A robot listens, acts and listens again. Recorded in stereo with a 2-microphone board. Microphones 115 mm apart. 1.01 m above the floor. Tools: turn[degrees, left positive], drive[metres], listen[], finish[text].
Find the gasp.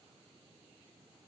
Action: listen[]
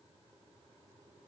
Action: listen[]
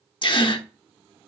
Thought: The gasp: about 45° left or 135° left.
Action: turn[45]
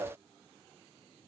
Action: listen[]
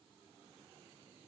Action: finish[I heard a gasp, but can't make it out now. It was about straight ahead or 90° left.]